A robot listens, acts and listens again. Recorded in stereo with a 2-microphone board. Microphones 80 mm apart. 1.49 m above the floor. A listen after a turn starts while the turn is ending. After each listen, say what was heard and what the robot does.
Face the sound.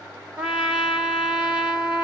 Turn 30° right.
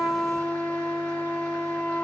So it is at 20° left. Turn 20° left.
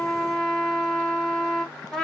Found it: a trumpet, straight ahead, 1 to 2 m away.